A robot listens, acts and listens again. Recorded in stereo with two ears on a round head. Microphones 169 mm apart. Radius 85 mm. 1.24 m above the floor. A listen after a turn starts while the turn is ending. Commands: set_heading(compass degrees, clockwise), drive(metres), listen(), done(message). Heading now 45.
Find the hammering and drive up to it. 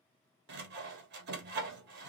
listen()
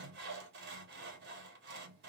listen()
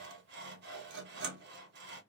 done("I can't make out hammering to turn to.")